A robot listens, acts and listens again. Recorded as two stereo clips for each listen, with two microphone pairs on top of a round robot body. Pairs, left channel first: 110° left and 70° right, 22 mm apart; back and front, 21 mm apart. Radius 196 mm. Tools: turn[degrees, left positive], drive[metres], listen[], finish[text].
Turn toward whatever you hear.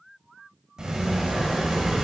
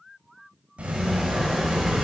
Action: finish[Facing the sliding door, 1 to 2 m away.]